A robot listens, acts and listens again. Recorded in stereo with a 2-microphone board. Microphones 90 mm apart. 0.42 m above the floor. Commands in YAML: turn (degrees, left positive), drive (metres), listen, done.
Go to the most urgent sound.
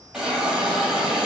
listen: true
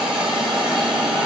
listen: true
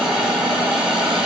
done: "I can't make out anything urgent, only a hiss."